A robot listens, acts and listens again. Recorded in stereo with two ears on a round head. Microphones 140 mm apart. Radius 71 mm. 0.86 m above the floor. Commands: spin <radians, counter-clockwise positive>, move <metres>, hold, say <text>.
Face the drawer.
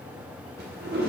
spin -1.13
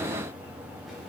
hold
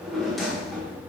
say Facing the drawer, under 1 m away.